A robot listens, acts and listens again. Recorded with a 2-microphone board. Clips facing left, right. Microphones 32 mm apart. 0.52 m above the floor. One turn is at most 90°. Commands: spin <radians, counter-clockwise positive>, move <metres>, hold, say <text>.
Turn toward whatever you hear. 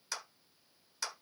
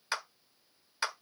spin -0.79
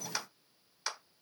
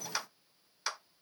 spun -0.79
say Facing the clap.